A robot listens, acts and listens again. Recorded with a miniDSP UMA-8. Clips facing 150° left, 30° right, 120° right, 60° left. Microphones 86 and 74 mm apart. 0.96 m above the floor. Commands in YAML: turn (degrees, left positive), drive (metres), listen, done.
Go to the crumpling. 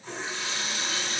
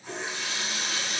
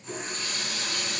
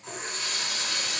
listen: true
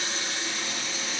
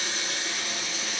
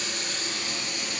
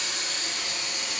listen: true
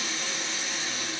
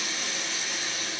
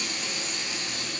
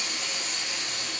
done: "I can't make out crumpling, only a running tap."